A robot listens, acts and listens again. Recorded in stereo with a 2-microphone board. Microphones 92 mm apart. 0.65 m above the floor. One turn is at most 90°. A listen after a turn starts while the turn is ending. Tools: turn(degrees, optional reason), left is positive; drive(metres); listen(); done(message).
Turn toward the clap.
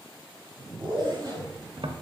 listen()
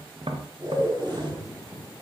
listen()
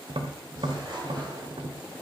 done("I can't make out a clap, only a zipper and tapping.")